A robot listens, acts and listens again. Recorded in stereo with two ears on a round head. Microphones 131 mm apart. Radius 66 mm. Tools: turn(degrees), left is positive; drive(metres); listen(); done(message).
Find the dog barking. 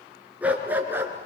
turn(degrees=-30)
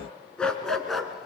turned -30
done("Found it: a dog barking, straight ahead.")